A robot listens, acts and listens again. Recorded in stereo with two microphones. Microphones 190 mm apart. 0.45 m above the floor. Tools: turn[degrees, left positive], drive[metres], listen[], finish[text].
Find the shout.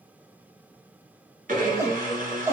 Action: turn[-30]
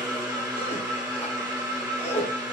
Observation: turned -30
Thought: So it is at 15° left.
Action: turn[15]
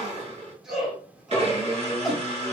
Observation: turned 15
Action: finish[Found it: a shout, straight ahead, 1 to 2 m away.]